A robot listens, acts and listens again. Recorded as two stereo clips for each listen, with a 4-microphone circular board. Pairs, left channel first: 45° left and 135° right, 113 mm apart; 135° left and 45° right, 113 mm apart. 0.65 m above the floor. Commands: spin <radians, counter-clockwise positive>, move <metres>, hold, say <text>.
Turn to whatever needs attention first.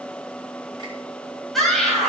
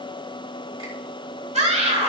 spin -0.79
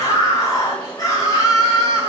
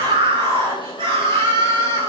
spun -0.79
spin -0.17
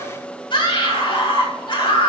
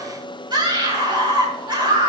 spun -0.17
say Found it: a scream, straight ahead.